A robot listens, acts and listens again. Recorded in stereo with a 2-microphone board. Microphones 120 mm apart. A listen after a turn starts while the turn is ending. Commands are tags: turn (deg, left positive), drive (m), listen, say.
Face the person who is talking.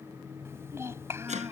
<turn deg="-20"/>
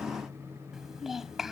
<say>Found it: a child speaking, straight ahead.</say>